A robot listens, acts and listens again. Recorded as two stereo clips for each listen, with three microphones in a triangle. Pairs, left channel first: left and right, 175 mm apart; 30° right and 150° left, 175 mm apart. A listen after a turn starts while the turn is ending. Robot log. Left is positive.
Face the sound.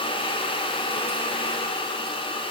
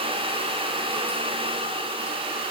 cmd idle
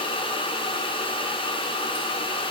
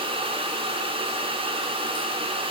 cmd idle
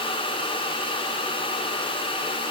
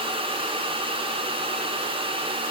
end: I can't make out anything to turn to.